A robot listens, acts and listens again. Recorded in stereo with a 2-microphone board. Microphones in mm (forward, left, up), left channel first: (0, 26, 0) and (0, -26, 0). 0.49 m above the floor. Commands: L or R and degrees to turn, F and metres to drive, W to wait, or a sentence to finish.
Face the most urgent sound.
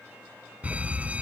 R25
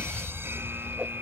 R130
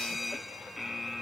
Facing the fire alarm.